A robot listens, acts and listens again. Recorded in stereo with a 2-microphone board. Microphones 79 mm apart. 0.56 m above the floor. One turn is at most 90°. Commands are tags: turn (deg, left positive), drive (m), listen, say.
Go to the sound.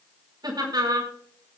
<turn deg="-65"/>
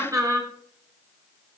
<turn deg="-50"/>
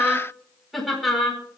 <drive m="1.0"/>
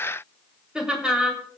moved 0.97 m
<turn deg="-10"/>
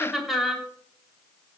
<drive m="1.0"/>
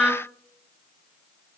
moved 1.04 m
<turn deg="-10"/>
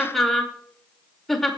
<drive m="1.0"/>
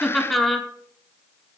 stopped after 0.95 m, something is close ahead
<say>I am next to the laughter.</say>